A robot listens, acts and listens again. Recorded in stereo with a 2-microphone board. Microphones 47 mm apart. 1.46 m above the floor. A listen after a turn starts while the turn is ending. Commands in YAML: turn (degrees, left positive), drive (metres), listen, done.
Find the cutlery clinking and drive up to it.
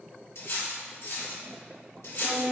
turn: 60
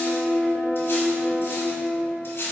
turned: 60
turn: 55
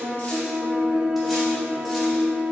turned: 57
listen: true
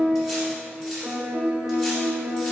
listen: true
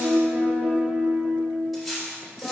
drive: 1.0
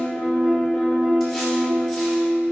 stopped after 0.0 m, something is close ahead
listen: true
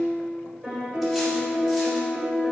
listen: true
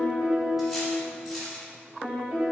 done: "Something is in my way. I am facing the cutlery clinking but have not reached it."